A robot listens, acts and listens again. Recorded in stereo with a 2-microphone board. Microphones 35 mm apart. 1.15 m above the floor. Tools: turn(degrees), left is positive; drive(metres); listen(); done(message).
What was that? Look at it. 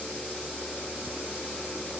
listen()
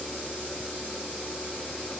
listen()
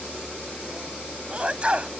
turn(degrees=-25)
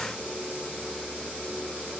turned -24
listen()
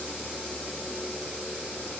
done("I heard a sneeze, but can't make it out now. It was about 5° right or 130° right.")